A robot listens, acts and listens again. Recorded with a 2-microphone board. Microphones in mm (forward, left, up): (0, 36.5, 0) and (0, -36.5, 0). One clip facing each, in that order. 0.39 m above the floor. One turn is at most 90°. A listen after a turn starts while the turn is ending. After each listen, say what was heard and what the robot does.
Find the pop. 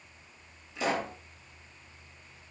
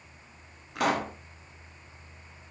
The pop: about 65° right or 115° right. Turn 65° right.
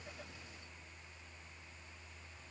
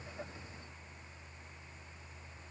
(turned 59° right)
Keep listening.
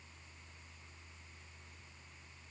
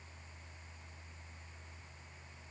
I heard a pop, but can't make it out now. It was about 10° right or 55° right.